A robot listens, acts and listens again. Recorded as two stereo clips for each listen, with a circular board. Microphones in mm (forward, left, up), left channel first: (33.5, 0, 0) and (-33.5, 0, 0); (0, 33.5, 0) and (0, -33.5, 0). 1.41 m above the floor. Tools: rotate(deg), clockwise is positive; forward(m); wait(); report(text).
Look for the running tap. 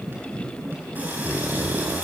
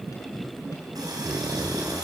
rotate(115)
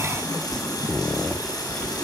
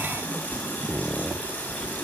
rotate(-25)
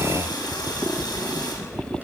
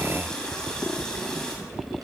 rotate(-10)
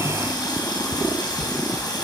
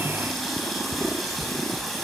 report("Found it: a running tap, straight ahead.")